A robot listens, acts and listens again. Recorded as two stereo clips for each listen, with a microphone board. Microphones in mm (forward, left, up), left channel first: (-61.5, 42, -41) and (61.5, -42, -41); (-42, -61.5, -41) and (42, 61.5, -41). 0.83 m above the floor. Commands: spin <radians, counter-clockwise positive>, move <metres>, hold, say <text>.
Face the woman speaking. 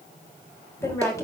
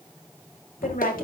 spin -2.53
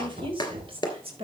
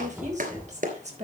spin 0.26
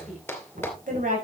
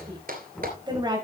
say Found it: a woman speaking, straight ahead.